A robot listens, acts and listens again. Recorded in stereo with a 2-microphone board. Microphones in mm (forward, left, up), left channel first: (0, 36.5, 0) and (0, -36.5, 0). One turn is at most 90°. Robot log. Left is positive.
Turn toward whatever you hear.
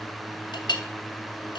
cmd yaw +90
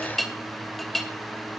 end: Found it: a clink, straight ahead.